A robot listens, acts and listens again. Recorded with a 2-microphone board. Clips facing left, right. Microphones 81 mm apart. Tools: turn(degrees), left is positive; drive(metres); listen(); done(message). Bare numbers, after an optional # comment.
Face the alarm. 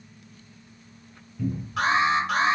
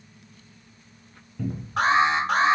# The alarm: about 40° right or 140° right.
turn(-40)
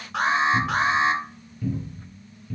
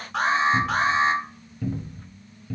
done("Found it: an alarm, straight ahead.")